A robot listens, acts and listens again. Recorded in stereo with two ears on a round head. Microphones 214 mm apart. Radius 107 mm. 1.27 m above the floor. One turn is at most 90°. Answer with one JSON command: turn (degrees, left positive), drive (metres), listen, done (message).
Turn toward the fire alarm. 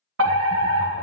{"turn": -60}
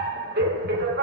{"turn": -50}
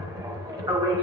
{"turn": -20}
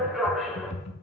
{"done": "Facing the fire alarm."}